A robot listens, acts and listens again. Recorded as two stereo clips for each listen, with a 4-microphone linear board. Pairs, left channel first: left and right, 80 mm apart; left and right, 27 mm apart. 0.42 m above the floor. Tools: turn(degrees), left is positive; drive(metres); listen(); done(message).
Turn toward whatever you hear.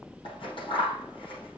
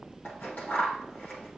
turn(degrees=90)
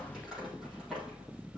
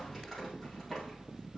done("Facing the scissors.")